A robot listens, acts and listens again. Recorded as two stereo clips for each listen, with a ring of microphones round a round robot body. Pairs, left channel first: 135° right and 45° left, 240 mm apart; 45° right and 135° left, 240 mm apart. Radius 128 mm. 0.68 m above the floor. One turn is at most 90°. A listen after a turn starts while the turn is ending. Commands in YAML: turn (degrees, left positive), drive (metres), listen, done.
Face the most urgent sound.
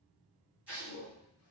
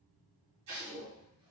listen: true
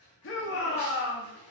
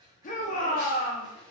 turn: -90
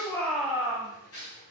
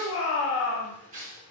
turn: -35
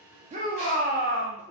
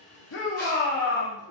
done: "Found it: a shout, straight ahead, under 1 m away."